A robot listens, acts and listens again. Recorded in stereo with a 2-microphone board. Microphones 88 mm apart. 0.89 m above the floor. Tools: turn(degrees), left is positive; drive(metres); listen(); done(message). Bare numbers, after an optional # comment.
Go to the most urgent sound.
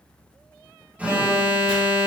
# The alarm: about 20° right or 160° right.
turn(-20)
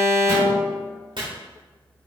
# So it is at 140° right.
turn(-140)
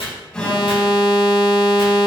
# The alarm is now 15° left.
turn(15)
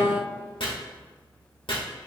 drive(1.0)
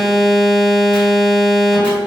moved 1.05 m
drive(1.0)
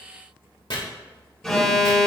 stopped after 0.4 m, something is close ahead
# The alarm is now 10° left.
turn(10)
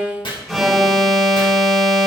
done("I am next to the alarm.")